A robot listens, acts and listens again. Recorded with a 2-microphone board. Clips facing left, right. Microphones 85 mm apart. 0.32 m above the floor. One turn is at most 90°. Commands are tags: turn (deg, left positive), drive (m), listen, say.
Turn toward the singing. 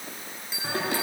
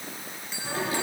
<turn deg="90"/>
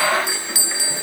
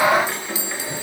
<listen/>
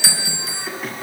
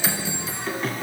<say>Facing the singing.</say>